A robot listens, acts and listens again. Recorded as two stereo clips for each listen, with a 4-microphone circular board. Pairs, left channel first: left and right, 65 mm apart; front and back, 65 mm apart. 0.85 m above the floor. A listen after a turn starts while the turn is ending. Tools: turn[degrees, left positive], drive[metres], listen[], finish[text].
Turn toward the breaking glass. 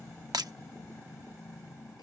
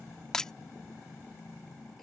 Thought: The breaking glass: 80° right.
Action: turn[-80]
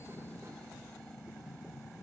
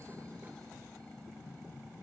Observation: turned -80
Action: finish[Facing where the breaking glass came from. I can't hear it now.]